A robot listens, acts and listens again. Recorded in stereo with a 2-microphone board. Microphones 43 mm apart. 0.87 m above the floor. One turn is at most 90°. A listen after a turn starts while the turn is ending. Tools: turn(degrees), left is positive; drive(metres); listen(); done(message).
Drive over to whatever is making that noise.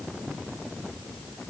listen()
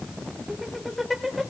turn(degrees=30)
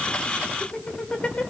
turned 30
turn(degrees=90)
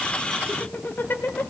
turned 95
turn(degrees=55)
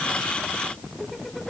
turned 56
drive(metres=1.0)
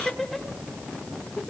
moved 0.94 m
drive(metres=1.0)
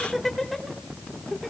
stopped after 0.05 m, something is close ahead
done("Blocked. The laughter is further on, straight ahead.")